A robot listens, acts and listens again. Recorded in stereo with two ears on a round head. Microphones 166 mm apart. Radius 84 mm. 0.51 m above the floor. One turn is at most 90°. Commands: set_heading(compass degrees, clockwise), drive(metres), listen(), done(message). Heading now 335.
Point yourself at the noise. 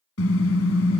set_heading(245)
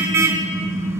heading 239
set_heading(254)
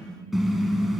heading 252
done("Found it: a car horn, straight ahead, 2 to 4 m away.")